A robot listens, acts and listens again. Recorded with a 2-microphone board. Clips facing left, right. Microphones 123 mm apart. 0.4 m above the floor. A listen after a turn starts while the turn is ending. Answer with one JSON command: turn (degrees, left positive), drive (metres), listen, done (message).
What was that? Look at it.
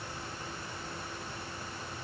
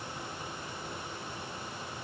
{"listen": true}
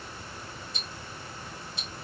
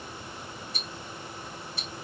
{"turn": 20}
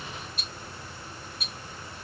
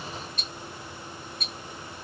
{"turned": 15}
{"done": "Found it: ticking, straight ahead."}